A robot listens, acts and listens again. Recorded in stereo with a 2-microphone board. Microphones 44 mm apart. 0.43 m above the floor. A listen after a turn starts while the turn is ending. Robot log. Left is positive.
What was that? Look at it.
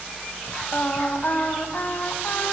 note: The singing: about 50° left or 130° left.
cmd yaw +50
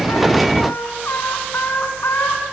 note: So it is at 65° left.
cmd yaw +65
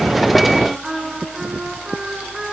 note: The singing is now 10° right.
cmd yaw -10
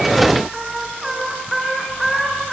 end: Facing the singing.